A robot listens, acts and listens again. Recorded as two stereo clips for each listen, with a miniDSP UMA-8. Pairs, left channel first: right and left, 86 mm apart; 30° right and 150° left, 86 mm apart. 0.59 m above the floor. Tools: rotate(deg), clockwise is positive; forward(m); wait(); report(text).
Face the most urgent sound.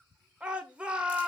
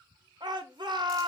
rotate(-165)
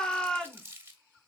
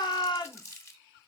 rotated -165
rotate(10)
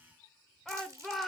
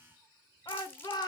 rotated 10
report("Facing the shout, 1 to 2 m away.")